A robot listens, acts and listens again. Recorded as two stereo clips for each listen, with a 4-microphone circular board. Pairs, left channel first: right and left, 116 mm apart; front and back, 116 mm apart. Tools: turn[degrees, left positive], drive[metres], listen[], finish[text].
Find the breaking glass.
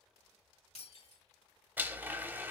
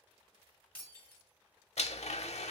Thought: The breaking glass: 75° right.
Action: turn[-75]
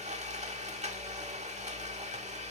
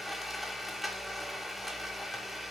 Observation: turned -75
Action: finish[Facing where the breaking glass came from. I can't hear it now.]